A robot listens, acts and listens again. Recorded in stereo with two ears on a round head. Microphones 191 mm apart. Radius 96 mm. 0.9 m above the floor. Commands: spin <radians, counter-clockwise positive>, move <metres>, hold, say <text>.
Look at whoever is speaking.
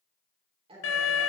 spin -0.52
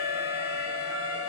hold
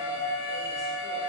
hold
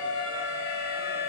say I heard a woman speaking, but can't make it out now. It was about straight ahead or 120° right.